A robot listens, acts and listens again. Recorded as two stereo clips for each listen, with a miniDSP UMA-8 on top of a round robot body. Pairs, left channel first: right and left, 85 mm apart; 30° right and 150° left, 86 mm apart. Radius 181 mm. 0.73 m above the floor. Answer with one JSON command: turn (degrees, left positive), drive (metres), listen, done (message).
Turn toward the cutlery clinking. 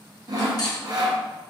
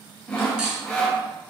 {"turn": -130}
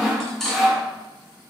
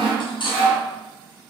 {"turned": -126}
{"done": "Facing the cutlery clinking, under 1 m away."}